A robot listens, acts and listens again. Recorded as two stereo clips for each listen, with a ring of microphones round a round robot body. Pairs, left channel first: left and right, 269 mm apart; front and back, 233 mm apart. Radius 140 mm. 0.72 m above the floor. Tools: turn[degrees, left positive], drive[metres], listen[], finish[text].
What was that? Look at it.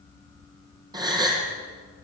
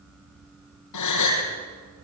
Thought: The gasp: 15° right.
Action: turn[-15]
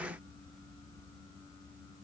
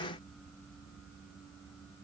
Action: finish[Facing where the gasp came from. I can't hear it now.]